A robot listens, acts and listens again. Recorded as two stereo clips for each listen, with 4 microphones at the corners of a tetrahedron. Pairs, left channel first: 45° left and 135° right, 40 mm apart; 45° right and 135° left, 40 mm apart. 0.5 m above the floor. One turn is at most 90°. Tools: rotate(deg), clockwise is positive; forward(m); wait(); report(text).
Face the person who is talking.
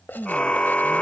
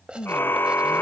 rotate(75)
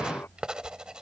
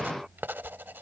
wait()
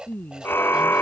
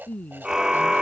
report("Found it: a woman speaking, straight ahead.")